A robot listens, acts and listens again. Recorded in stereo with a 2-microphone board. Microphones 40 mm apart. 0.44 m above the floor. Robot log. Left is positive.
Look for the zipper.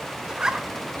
note: The zipper: about 20° right or 160° right.
cmd yaw -20
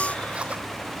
cmd idle
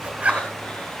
note: So it is at 140° right.
cmd yaw -140
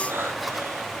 cmd idle
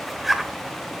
end: Facing the zipper, 1 to 2 m away.